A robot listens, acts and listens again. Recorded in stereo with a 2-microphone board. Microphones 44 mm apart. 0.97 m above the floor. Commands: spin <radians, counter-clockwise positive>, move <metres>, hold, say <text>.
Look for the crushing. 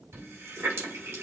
hold
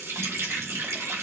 hold
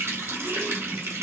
say I can't make out crushing, only a running tap.